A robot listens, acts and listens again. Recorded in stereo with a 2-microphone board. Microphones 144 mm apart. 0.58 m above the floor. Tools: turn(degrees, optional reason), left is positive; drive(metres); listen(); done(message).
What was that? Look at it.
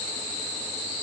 listen()
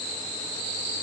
listen()
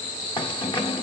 turn(degrees=35, reason="The keys jangling: about 35° left or 145° left.")
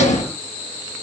turn(degrees=100, reason="So it is at 100° left.")
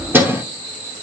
turn(degrees=-20, reason="The keys jangling is now 20° right.")
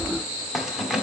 done("Facing the keys jangling.")